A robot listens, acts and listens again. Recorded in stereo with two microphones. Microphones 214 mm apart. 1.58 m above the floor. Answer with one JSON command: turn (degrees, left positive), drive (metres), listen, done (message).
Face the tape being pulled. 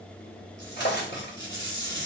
{"turn": -55}
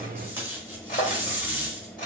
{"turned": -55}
{"turn": -10}
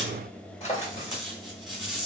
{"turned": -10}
{"done": "Found it: tape being pulled, straight ahead."}